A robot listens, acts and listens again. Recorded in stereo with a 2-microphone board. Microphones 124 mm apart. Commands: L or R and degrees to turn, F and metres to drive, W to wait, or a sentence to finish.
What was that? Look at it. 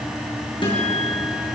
L40
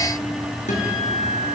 L95
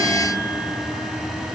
Found it: a guitar, straight ahead, over 4 m away.